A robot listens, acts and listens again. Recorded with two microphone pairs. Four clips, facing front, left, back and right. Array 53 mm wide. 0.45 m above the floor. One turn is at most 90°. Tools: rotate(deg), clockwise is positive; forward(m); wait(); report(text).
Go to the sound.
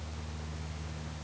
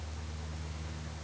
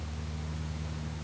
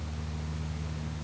wait()
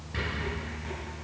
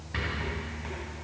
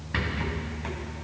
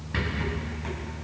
rotate(90)
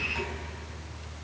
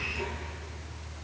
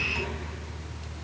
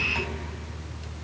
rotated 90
rotate(80)
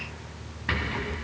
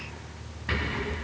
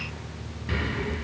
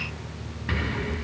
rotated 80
forward(1.0)
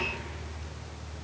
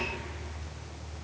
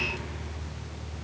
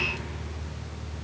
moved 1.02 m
wait()
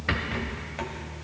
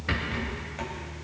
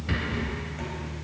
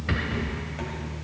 forward(1.0)
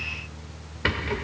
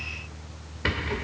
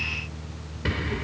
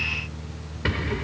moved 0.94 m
forward(1.0)
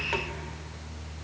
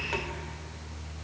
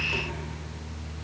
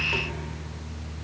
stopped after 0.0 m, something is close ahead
wait()
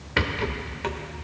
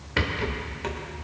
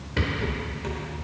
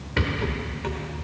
report("I am next to the rattle.")